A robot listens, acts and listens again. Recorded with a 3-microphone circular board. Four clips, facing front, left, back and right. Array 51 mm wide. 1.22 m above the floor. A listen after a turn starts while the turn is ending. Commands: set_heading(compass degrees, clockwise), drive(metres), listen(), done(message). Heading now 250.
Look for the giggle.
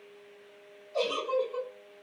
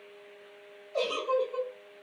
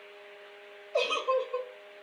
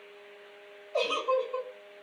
set_heading(35)
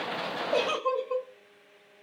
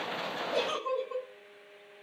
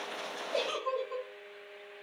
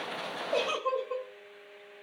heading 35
set_heading(60)
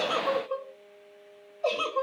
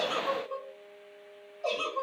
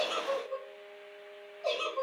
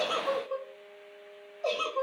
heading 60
done("Facing the giggle.")